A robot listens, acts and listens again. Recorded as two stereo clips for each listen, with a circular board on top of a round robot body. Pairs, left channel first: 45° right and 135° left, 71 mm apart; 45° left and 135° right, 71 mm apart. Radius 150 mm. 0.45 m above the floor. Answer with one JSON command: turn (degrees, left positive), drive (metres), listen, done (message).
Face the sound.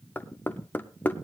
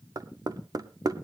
{"turn": -110}
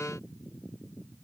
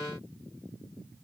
{"listen": true}
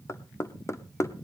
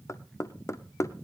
{"done": "Facing the knocking, 1 to 2 m away."}